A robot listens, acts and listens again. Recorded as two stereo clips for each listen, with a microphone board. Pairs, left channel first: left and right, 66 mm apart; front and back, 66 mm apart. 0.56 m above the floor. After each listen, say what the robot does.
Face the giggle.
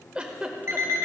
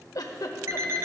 Turn 15° right.
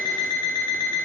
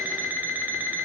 Keep listening.
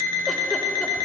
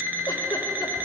Keep listening.
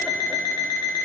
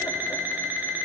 Facing where the giggle came from. I can't hear it now.